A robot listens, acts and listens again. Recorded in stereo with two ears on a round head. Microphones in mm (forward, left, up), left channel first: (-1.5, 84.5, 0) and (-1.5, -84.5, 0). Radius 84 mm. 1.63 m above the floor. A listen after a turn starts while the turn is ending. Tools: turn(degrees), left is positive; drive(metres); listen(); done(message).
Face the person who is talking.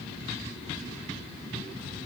listen()
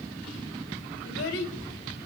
turn(degrees=90)
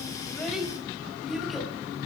done("Facing the child speaking.")